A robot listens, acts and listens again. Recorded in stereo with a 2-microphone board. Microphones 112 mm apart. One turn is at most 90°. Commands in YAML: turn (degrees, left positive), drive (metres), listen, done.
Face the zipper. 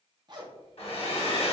turn: -40
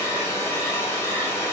listen: true
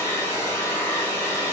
listen: true
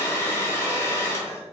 done: "I heard a zipper, but can't make it out now. It was about straight ahead or 100° right."